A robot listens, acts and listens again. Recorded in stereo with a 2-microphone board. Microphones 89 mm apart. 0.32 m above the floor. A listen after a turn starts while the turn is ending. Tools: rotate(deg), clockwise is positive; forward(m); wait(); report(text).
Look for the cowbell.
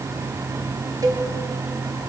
rotate(45)
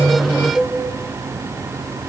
rotate(10)
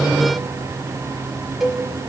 report("Facing the cowbell.")